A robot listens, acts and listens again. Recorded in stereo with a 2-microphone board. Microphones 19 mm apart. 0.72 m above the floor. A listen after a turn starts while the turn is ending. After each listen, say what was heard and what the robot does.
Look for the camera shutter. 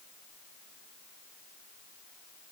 Keep listening.
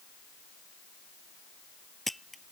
Turn 30° left.
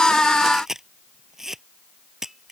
So it is at 25° right. Turn 25° right.
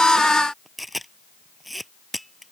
Facing the camera shutter.